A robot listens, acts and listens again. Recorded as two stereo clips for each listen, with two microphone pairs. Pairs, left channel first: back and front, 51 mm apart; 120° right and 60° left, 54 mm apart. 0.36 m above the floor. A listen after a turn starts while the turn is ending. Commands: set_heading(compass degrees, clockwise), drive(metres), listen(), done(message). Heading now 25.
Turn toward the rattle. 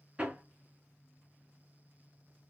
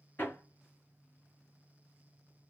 listen()
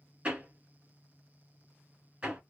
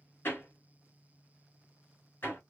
listen()
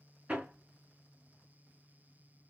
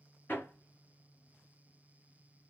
done("I can't make out a rattle to turn to.")